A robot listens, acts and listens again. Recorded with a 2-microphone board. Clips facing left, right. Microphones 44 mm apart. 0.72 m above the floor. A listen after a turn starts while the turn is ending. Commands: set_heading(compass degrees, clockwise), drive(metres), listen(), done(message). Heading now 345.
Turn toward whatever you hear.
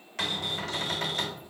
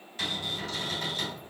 set_heading(255)
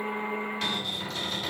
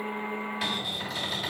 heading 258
set_heading(268)
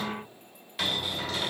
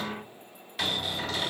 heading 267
done("Found it: a cupboard door, straight ahead, 1 to 2 m away.")